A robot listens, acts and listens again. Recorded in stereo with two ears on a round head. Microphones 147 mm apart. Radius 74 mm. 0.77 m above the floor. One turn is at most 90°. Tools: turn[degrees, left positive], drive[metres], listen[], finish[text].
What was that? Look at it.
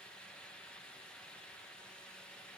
Action: listen[]
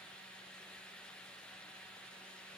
Action: listen[]
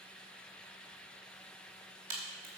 Thought: The crack: about 60° right or 120° right.
Action: turn[-60]
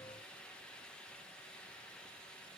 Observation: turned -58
Action: listen[]
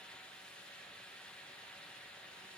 Action: finish[I heard a crack, but can't make it out now. It was about straight ahead or 65° right.]